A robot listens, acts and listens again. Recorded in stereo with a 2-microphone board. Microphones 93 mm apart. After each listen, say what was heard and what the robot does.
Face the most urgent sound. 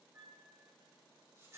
Keep listening.
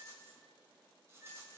Keep listening.
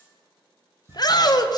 The shout: about 45° left or 135° left. Turn 45° left.
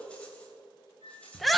Facing the shout, under 1 m away.